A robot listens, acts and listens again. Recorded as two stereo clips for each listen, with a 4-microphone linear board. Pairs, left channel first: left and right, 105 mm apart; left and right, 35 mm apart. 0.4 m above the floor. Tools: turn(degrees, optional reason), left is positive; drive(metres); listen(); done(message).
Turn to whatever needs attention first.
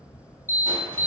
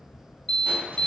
turn(degrees=25, reason="The alarm: about 25° left or 155° left.")
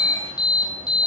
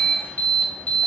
turn(degrees=125, reason="So it is at 125° left.")
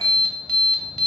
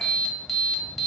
done("Found it: an alarm, straight ahead, 2 to 4 m away.")